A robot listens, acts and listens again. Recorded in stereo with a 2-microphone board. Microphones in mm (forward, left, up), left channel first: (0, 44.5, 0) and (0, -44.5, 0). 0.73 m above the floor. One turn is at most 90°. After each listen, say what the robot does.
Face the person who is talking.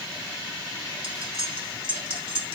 Keep listening.
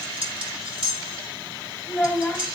Turn 20° left.
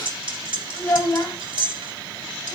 Turn 90° left.
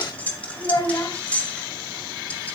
Turn 50° left.
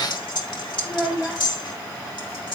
Facing the child speaking, 2 to 4 m away.